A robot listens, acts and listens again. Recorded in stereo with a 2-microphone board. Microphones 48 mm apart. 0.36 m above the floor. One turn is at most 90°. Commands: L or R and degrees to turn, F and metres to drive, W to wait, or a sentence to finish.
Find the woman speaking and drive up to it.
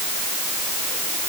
W
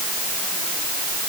W
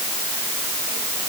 I can't make out a woman speaking.